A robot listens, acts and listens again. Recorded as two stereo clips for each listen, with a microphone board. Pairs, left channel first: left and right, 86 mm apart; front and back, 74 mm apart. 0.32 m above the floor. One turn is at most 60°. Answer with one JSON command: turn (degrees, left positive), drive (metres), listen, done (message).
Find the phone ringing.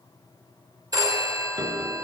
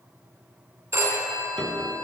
{"turn": -60}
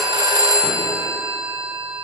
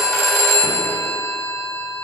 {"turn": -50}
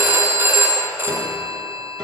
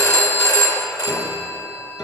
{"turn": -30}
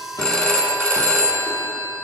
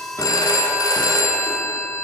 {"turn": 10}
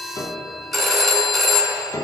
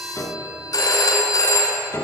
{"done": "Found it: a phone ringing, straight ahead, 2 to 4 m away."}